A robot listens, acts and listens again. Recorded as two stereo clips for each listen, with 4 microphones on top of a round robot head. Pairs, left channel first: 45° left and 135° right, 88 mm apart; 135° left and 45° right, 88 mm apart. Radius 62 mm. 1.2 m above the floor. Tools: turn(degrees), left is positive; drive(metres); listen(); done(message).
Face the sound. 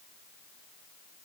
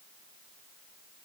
listen()
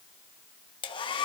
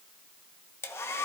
turn(degrees=75)
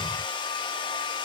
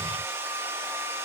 turn(degrees=15)
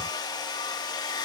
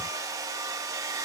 done("Facing the hair dryer.")